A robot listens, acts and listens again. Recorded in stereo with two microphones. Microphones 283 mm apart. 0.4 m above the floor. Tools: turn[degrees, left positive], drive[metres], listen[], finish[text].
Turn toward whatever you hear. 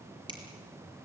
Thought: The finger snap: about 15° right or 165° right.
Action: turn[-15]
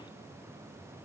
Action: listen[]
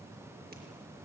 Action: listen[]
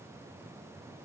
Action: finish[I heard a finger snap, but can't make it out now. It was about straight ahead or 150° right.]